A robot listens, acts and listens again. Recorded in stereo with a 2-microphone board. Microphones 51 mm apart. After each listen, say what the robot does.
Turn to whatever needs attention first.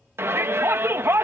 Turn 50° right.
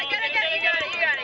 Found it: a shout, straight ahead.